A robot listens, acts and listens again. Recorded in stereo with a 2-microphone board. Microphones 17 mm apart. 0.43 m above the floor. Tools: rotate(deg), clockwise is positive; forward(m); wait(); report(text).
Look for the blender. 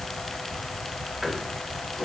wait()
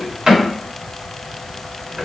wait()
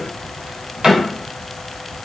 report("I can't make out a blender, only a drawer.")